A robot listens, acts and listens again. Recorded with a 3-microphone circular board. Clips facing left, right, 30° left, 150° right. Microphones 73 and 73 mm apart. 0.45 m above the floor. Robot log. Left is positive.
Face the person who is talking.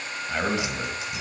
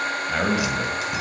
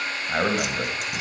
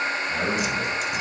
end: Found it: a man speaking, straight ahead.